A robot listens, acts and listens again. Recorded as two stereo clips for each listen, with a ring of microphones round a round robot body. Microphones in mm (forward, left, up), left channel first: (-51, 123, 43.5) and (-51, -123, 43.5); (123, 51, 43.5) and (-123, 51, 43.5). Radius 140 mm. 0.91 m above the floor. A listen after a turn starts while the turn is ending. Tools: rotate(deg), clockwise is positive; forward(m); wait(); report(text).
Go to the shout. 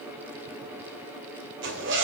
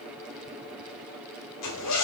wait()
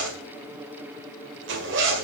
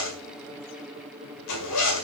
wait()
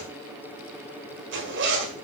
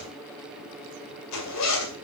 report("I can't make out a shout to turn to.")